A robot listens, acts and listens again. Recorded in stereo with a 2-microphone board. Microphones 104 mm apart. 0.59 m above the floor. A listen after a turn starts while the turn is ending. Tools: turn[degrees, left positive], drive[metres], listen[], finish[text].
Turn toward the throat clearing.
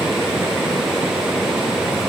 Action: listen[]
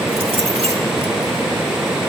Action: listen[]
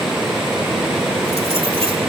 Action: finish[I can't make out throat clearing to turn to.]